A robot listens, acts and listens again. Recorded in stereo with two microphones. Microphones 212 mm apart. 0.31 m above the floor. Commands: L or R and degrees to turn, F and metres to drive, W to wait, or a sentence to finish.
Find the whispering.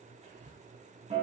R30
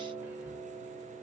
W
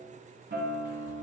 W
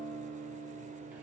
I heard whispering, but can't make it out now. It was about straight ahead or 120° right.